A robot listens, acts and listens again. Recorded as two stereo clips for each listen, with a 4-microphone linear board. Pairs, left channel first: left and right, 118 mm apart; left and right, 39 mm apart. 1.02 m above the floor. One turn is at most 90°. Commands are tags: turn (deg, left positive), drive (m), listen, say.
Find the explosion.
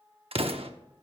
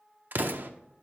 <turn deg="-60"/>
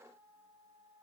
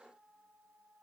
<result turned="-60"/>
<listen/>
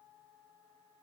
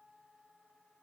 <say>I heard an explosion, but can't make it out now. It was about straight ahead or 60° right.</say>